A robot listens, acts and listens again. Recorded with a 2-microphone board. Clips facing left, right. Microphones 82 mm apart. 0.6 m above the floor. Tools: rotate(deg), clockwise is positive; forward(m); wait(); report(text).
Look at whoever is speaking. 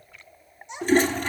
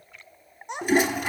rotate(60)
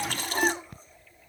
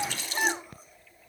wait()
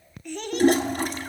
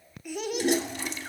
rotate(10)
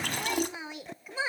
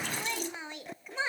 report("Facing the child speaking.")